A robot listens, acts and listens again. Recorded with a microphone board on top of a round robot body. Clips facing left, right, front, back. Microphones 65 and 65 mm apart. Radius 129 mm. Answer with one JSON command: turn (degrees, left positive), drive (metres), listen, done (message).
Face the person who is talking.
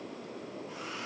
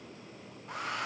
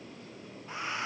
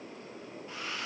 {"listen": true}
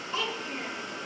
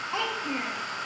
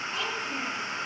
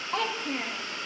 {"turn": -145}
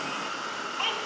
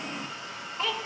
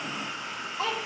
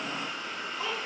{"done": "Facing the child speaking, 1 to 2 m away."}